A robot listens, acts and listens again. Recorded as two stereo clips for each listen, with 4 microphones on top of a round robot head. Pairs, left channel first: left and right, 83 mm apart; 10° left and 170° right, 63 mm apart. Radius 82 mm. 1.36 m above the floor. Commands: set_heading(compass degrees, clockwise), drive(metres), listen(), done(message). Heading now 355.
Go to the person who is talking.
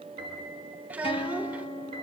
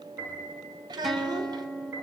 set_heading(160)
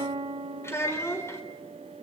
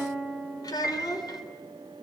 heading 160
set_heading(130)
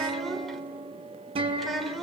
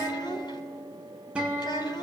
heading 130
drive(1.0)
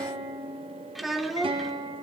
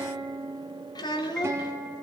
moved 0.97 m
drive(1.0)
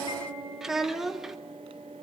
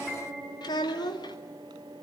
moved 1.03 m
drive(1.0)
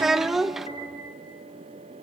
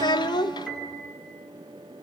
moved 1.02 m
drive(1.0)
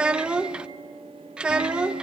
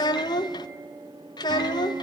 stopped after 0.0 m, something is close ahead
set_heading(140)
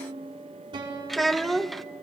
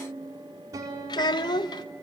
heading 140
done("Arrived at the child speaking, straight ahead.")